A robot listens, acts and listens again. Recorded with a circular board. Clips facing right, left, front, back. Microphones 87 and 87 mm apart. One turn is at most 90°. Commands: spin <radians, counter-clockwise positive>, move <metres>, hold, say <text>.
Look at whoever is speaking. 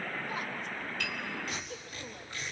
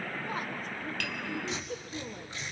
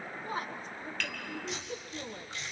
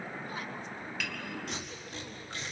spin 0.79
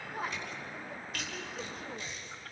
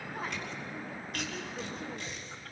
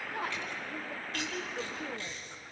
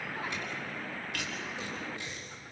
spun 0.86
say Found it: a woman speaking, straight ahead.